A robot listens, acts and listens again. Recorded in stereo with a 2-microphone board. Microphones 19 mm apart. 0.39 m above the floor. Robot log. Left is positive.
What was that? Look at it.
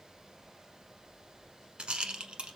cmd yaw -90
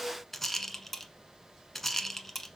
note: So it is at 15° left.
cmd yaw +15
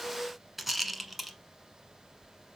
end: Facing the rattle, under 1 m away.